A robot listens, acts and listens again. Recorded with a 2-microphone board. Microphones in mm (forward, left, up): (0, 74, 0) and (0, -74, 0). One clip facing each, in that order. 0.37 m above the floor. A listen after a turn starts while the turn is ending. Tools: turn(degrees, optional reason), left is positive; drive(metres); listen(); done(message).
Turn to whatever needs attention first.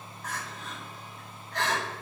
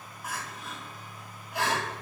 turn(degrees=-30)
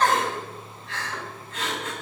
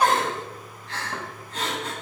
turn(degrees=-135, reason="So it is at 135° right.")
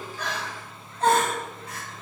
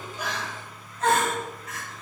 turn(degrees=35, reason="The crying is now 35° left.")
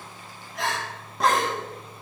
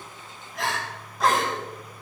done("Facing the crying, 2 to 4 m away.")